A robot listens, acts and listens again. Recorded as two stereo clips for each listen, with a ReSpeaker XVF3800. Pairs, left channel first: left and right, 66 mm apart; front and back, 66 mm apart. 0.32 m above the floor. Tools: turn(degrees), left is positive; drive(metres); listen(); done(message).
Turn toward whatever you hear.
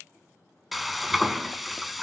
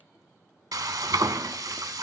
turn(degrees=180)
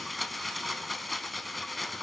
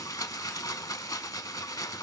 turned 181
done("Found it: frying, straight ahead.")